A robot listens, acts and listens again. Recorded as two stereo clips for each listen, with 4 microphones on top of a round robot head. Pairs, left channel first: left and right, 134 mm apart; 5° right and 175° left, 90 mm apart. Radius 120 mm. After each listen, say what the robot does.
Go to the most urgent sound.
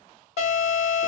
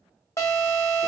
Turn 50° left.
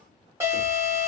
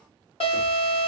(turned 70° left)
Turn 15° right.
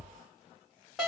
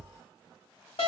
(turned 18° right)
Drive 1.0 m forward.
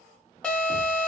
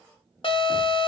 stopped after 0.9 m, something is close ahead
Turn 10° left.
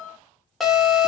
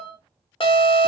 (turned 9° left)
I am next to the alarm.